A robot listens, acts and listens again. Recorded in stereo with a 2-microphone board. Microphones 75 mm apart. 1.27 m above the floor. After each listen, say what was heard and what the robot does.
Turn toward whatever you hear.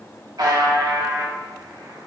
The buzzer: about 60° right or 120° right. Turn 60° right.
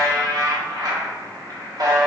So it is at 60° right. Turn 60° right.
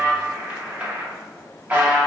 The buzzer is now 20° right. Turn 20° right.
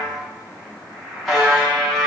Found it: a buzzer, straight ahead, under 1 m away.